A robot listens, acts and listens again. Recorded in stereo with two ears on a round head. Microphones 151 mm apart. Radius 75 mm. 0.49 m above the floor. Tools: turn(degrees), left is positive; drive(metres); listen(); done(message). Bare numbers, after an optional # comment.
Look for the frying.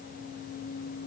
listen()
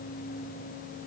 listen()
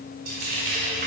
# The frying: about 55° right or 125° right.
turn(-55)
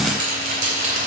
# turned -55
# So it is at 55° right.
turn(-55)
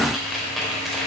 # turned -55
done("Found it: frying, straight ahead, 2 to 4 m away.")